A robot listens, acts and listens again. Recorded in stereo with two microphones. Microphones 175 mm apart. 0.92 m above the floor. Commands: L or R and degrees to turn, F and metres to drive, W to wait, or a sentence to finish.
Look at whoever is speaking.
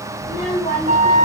L20
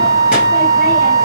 W
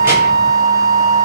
W
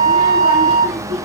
R40
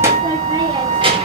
R30
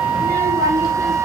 R20
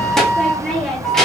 Facing the child speaking, 1 to 2 m away.